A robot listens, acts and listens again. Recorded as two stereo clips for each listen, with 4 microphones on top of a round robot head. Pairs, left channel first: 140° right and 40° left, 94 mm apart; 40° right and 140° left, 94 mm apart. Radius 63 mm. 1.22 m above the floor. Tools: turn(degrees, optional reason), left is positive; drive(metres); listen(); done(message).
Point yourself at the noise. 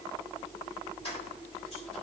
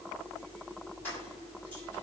turn(degrees=-115, reason="The keys jangling: 115° right.")
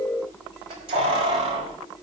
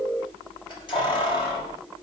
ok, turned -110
done("Found it: keys jangling, straight ahead, 2 to 4 m away.")